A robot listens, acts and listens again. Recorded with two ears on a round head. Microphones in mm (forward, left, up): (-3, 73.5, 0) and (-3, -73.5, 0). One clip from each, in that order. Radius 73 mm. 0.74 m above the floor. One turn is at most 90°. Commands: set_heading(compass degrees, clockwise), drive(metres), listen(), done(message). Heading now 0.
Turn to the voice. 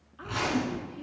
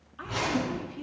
set_heading(30)
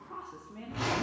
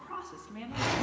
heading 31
set_heading(121)
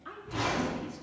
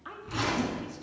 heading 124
set_heading(149)
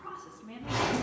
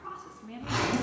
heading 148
done("Found it: a woman speaking, straight ahead, 1 to 2 m away.")